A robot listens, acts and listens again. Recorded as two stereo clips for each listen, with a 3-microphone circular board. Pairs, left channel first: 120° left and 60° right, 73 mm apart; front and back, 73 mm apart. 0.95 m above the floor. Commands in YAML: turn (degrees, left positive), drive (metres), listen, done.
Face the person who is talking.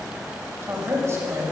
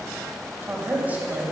turn: -115
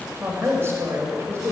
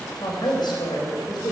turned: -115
turn: -10
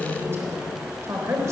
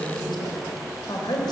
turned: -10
turn: -10
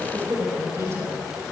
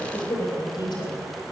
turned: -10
turn: -10
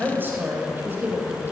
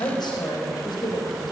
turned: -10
done: "Found it: a woman speaking, straight ahead."